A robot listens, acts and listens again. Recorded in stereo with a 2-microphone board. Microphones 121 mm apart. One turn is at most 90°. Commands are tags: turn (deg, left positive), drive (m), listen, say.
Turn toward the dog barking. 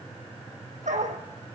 <turn deg="-90"/>
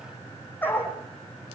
<turn deg="20"/>
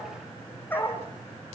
<turn deg="15"/>
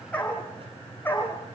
<turn deg="15"/>
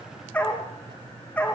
<turn deg="10"/>
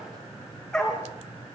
<say>Facing the dog barking.</say>